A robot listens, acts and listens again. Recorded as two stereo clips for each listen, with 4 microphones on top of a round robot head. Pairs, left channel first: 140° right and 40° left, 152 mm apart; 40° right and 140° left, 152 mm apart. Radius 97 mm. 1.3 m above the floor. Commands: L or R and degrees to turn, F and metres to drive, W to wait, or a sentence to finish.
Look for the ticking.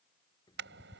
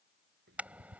L155
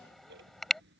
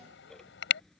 L45
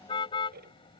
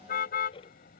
L15
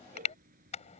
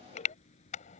Facing the ticking.